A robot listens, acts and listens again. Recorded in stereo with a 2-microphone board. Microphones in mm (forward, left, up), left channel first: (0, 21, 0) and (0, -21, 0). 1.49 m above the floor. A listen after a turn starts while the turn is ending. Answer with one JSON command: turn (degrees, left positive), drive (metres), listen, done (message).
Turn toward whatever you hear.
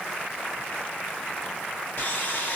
{"turn": 50}
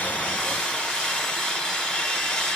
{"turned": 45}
{"turn": 15}
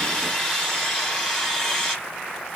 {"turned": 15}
{"done": "Facing the sawing, 1 to 2 m away."}